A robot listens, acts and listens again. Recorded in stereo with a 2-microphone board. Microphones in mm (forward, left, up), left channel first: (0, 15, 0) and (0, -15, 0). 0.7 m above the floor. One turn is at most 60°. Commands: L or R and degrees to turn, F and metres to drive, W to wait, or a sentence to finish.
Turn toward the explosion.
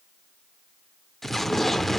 L30
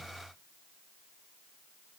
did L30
W
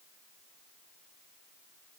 I heard an explosion, but can't make it out now. It was about 25° right or 145° left.